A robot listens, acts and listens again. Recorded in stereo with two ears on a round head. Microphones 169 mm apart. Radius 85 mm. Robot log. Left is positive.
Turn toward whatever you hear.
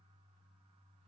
cmd idle
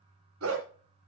cmd yaw -90
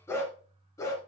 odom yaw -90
note: So it is at 15° left.
cmd yaw +15
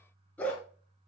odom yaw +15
note: The dog barking is now 10° left.
cmd yaw +10
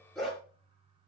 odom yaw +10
end: Facing the dog barking, 2 to 4 m away.